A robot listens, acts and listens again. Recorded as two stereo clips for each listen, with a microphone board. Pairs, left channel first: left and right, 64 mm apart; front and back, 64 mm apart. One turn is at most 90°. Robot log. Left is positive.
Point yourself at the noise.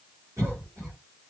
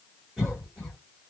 note: The cough: 90° right.
cmd yaw -90
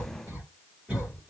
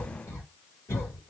note: The cough is now 20° right.
cmd yaw -20
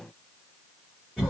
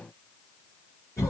end: Found it: a cough, straight ahead, 1 to 2 m away.